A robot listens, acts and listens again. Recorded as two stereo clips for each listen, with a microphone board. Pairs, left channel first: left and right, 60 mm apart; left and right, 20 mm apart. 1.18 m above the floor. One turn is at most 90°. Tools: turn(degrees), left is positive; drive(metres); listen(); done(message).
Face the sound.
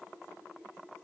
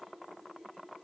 listen()
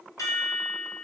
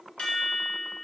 turn(degrees=65)
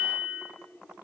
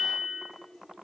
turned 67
done("Found it: a chime, straight ahead, 2 to 4 m away.")